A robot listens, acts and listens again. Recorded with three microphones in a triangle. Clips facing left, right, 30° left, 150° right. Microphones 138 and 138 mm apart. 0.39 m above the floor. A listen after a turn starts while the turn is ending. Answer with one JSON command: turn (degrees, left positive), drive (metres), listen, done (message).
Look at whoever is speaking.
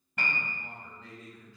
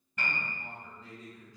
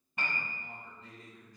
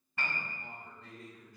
{"turn": -160}
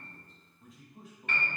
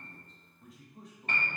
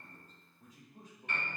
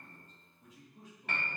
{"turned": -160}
{"turn": 10}
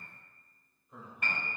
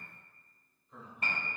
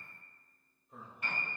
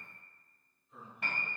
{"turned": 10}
{"turn": 40}
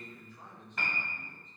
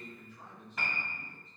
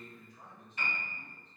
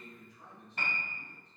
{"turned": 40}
{"turn": 25}
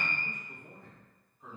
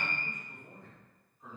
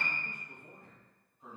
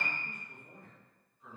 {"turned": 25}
{"turn": 15}
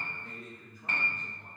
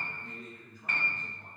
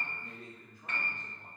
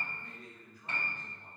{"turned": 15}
{"done": "Found it: a man speaking, straight ahead, 2 to 4 m away."}